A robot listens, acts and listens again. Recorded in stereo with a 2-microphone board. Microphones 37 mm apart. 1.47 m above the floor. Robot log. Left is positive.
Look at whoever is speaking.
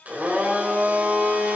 cmd idle
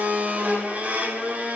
cmd idle
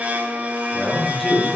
cmd yaw +30
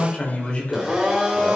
note: So it is at 150° left.
cmd yaw +150
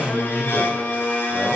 note: The man speaking is now 50° left.
cmd yaw +50
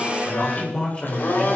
note: The man speaking is now 25° left.
cmd yaw +25
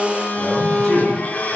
end: Found it: a man speaking, straight ahead.